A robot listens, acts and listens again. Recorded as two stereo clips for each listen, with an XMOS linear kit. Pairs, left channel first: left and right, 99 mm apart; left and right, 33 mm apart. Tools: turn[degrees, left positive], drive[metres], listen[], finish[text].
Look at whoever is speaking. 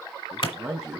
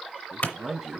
Action: turn[-30]
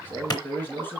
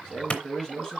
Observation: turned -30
Thought: So it is at 20° left.
Action: turn[20]
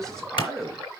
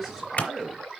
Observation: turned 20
Action: finish[Found it: a man speaking, straight ahead, 2 to 4 m away.]